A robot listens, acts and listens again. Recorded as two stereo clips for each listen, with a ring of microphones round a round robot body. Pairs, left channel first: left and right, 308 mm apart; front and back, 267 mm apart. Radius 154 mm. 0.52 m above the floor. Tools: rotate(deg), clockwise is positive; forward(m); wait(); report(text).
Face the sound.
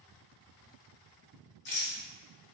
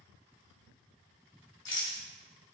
rotate(-30)
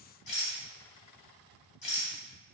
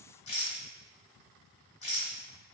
rotate(-20)
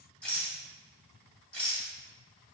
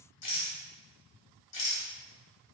report("Found it: a rattle, straight ahead.")